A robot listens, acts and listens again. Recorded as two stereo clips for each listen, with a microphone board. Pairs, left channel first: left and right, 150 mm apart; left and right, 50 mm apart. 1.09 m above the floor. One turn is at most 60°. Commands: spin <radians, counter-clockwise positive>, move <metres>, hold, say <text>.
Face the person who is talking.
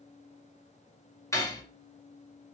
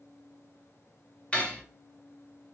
hold
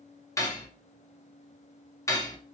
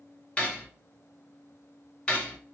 hold
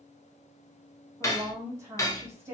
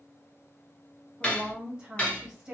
spin -0.35
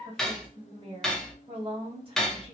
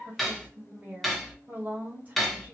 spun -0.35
spin -1.05
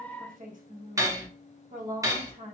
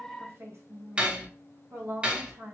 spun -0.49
spin -1.05
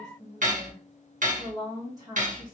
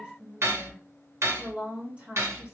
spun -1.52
spin -0.52
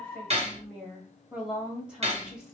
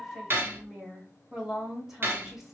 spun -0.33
spin -0.17
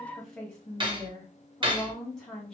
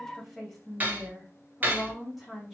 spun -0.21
say Found it: a woman speaking, straight ahead.